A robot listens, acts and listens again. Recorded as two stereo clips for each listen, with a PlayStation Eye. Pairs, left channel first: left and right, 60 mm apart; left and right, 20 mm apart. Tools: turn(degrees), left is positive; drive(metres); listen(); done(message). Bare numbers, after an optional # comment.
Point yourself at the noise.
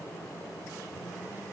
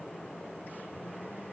listen()
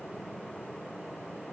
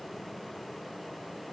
listen()
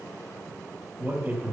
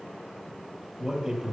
# The man speaking: about 30° right or 150° right.
turn(-30)
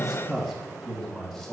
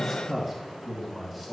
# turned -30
done("Found it: a man speaking, straight ahead, 2 to 4 m away.")